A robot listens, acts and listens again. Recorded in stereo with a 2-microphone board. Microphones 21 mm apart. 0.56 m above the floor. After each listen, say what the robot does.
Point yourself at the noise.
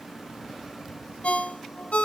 Turn 90° left.
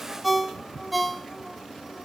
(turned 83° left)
Facing the ringtone, 1 to 2 m away.